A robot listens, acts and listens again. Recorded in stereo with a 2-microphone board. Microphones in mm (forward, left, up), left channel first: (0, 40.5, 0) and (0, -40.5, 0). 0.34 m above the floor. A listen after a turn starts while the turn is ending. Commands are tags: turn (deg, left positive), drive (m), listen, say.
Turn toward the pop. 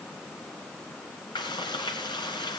<listen/>
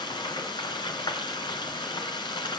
<listen/>
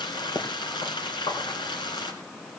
<turn deg="55"/>
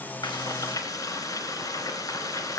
<listen/>
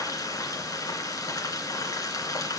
<say>I heard a pop, but can't make it out now. It was about straight ahead or 70° left.</say>